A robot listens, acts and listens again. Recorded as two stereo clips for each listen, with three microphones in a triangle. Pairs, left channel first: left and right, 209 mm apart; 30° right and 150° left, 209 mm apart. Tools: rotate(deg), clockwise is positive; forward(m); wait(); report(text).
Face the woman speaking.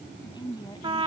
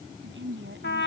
rotate(-160)
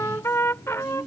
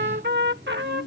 report("Found it: a woman speaking, straight ahead.")